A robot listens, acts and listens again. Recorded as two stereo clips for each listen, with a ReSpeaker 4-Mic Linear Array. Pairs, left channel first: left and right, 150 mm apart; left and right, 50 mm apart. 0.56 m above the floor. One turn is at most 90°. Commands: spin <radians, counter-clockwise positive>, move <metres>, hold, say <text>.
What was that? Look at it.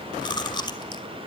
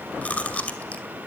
spin 0.52
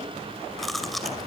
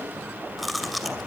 say Found it: chewing, straight ahead, 2 to 4 m away.